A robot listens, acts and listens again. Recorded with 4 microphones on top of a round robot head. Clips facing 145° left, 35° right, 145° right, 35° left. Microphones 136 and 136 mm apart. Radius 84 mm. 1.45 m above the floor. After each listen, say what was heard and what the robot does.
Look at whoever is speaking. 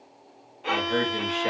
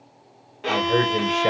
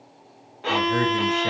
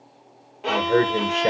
The man speaking: 10° left. Turn 10° left.
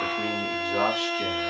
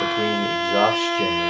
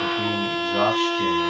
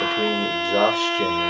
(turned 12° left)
Facing the man speaking, 1 to 2 m away.